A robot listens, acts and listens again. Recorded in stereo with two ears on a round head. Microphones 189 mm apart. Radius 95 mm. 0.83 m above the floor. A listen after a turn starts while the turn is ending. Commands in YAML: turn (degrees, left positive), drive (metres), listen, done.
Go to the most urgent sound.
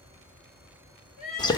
turn: 40
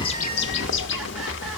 listen: true
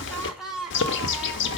drive: 1.0
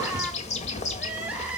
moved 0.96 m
drive: 1.0
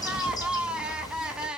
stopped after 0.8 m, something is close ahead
done: "Arrived at the crying, straight ahead."